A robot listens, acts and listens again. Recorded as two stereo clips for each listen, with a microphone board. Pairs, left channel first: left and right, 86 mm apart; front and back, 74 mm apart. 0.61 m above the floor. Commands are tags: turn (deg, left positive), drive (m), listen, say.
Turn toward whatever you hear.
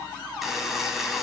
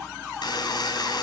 <say>Facing the buzzer.</say>